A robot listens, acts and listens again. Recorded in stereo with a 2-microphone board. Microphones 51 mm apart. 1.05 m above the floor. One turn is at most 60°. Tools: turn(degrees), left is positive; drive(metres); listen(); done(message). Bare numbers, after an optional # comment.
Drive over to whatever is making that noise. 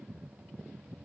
listen()
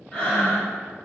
# The breathing: about 15° left or 165° left.
turn(15)
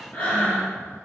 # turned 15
# So it is at 150° left.
turn(60)
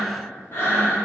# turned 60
# The breathing is now 75° left.
turn(60)
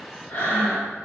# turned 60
# The breathing is now 40° left.
turn(40)
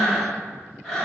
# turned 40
# The breathing is now 10° left.
turn(10)
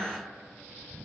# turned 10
listen()
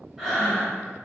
drive(1.0)
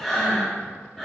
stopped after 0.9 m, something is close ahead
done("I am next to the breathing.")